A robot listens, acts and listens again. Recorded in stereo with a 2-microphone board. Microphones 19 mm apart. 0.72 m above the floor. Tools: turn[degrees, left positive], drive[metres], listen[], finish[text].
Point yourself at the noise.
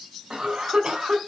Thought: The cough: about 55° right or 125° right.
Action: turn[-55]
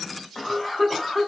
Action: finish[Facing the cough.]